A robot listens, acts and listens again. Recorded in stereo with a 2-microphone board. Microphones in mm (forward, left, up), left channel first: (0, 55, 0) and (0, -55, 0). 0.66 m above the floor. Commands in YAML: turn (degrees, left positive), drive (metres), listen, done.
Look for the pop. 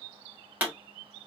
turn: -15
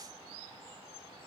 listen: true
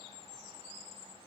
done: "I heard a pop, but can't make it out now. It was about straight ahead or 150° right."